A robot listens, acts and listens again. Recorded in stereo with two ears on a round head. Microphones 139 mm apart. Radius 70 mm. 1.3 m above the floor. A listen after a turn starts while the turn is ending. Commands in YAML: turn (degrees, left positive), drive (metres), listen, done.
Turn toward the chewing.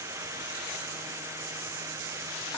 listen: true
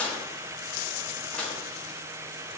listen: true
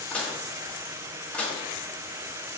done: "I can't make out chewing, only dishes clattering."